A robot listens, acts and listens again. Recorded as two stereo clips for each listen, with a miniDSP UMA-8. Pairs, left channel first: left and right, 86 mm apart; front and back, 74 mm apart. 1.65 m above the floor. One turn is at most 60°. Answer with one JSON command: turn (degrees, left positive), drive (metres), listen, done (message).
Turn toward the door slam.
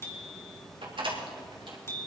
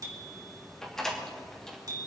{"turn": -60}
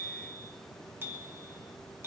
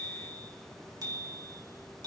{"turn": -25}
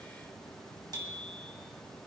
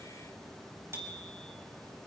{"done": "Facing where the door slam came from. I can't hear it now."}